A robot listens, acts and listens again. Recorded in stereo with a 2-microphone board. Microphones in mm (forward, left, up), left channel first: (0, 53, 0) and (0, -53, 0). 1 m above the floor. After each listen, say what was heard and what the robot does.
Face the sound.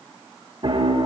The piano: about 50° right or 130° right. Turn 50° right.
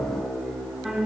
Facing the piano, 1 to 2 m away.